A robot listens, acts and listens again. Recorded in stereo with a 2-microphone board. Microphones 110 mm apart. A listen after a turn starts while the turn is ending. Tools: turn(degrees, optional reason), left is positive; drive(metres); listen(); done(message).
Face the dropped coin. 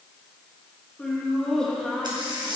turn(degrees=-45, reason="The dropped coin: about 45° right or 135° right.")
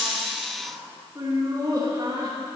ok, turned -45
listen()
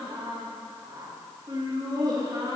done("I heard a dropped coin, but can't make it out now. It was about straight ahead or 90° right.")